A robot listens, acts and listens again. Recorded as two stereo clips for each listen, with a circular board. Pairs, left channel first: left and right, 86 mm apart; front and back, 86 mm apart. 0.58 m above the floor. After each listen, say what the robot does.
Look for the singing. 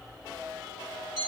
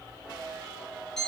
Keep listening.
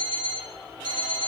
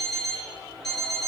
Keep listening.
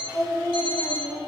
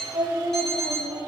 Turn 145° left.
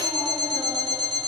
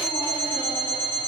Keep listening.
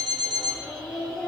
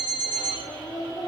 Found it: singing, straight ahead.